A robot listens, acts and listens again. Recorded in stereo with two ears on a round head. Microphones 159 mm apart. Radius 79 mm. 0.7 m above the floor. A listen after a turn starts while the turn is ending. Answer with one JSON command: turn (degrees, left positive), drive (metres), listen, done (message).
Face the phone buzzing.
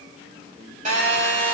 {"turn": -40}
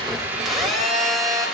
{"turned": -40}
{"done": "Facing the phone buzzing, 2 to 4 m away."}